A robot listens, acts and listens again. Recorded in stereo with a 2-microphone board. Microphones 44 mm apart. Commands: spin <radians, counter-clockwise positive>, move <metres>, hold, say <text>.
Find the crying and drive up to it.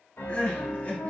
spin 0.61
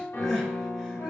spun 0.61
hold
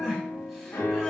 move 1.0
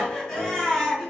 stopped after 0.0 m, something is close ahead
spin 0.26
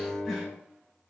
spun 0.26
hold
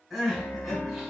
say Something is in my way. I am facing the crying but have not reached it.